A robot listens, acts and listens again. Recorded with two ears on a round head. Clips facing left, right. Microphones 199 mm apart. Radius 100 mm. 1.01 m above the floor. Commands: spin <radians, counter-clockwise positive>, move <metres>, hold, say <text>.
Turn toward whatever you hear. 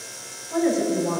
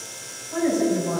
spin 1.57
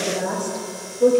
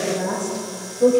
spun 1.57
say Found it: a woman speaking, straight ahead, 2 to 4 m away.